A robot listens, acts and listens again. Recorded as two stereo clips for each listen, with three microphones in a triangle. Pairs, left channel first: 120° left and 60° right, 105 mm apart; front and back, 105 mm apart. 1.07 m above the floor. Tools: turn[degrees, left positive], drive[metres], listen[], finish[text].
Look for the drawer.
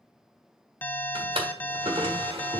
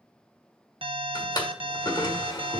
Thought: The drawer: 45° right.
Action: turn[-45]
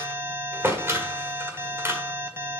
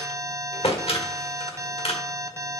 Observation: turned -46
Action: finish[Found it: a drawer, straight ahead.]